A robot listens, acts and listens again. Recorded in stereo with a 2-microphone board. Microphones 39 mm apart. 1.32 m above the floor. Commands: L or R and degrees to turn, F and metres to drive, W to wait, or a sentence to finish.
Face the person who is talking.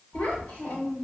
L90
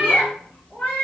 W
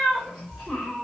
Facing the child speaking, 1 to 2 m away.